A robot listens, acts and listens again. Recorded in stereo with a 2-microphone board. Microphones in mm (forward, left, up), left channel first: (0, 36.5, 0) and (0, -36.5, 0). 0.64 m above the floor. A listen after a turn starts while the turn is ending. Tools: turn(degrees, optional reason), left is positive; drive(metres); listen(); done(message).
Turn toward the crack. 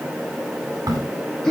turn(degrees=-65, reason="The crack: about 65° right or 115° right.")
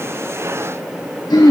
listen()
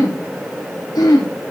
done("I heard a crack, but can't make it out now. It was about straight ahead or 50° right.")